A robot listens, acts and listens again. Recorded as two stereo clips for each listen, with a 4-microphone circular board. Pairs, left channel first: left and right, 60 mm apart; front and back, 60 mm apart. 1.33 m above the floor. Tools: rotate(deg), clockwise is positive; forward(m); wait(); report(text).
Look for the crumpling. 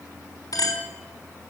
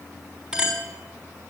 wait()
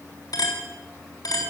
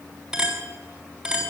wait()
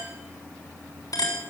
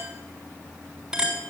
report("I can't make out crumpling to turn to.")